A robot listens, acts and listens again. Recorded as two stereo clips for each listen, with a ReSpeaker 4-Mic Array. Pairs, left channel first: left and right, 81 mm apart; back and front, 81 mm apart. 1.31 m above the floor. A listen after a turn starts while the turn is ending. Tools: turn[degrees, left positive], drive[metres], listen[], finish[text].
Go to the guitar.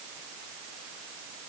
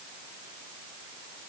Action: listen[]
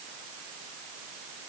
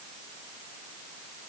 Action: listen[]
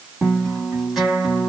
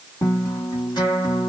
Thought: The guitar: 175° right.
Action: turn[-175]
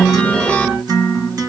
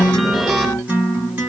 Thought: The guitar is now 65° right.
Action: turn[-65]
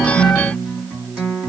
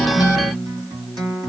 Thought: The guitar is now 10° right.
Action: turn[-10]
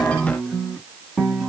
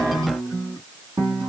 Action: drive[1.0]
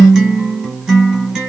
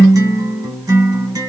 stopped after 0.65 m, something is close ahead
Action: finish[I am next to the guitar.]